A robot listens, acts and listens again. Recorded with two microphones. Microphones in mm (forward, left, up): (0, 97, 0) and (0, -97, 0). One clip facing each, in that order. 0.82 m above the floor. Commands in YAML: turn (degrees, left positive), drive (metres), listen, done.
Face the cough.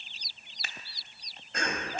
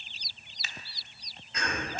turn: 60
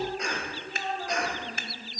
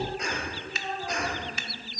done: "Facing the cough."